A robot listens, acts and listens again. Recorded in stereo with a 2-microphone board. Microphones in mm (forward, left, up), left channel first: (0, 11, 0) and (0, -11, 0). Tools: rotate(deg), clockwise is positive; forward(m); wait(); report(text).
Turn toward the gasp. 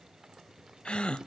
rotate(-55)
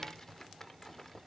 wait()
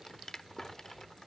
report("I heard a gasp, but can't make it out now. It was about straight ahead or 70° left.")